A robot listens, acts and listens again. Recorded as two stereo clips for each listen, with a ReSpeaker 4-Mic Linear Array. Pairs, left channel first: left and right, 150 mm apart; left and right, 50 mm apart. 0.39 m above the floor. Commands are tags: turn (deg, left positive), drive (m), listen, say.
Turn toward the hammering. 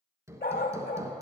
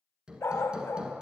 <turn deg="-20"/>
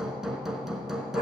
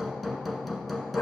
<say>Found it: hammering, straight ahead, 1 to 2 m away.</say>